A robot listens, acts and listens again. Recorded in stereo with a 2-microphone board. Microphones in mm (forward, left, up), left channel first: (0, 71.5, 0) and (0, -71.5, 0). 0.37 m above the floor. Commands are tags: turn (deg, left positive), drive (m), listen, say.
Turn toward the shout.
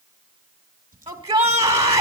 <turn deg="-45"/>
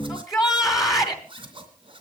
<say>Found it: a shout, straight ahead, 2 to 4 m away.</say>